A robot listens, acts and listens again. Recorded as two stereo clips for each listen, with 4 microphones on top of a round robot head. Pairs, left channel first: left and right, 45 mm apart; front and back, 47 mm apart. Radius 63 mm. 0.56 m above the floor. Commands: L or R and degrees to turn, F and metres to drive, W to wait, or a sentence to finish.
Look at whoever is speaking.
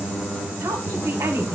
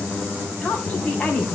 R80
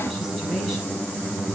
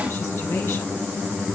W
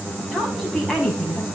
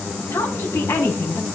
Found it: a woman speaking, straight ahead, over 4 m away.